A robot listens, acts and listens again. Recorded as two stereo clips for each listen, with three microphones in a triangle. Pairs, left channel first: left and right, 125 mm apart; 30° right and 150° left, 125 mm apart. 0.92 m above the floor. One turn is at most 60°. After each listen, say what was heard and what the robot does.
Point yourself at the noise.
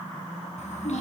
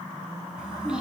The child speaking: 65° left. Turn 60° left.
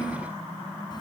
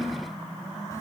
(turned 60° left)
The child speaking is now 35° left. Turn 35° left.
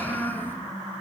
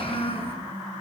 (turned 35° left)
The child speaking is now 15° left. Turn 15° left.
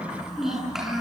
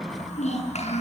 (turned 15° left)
Found it: a child speaking, straight ahead.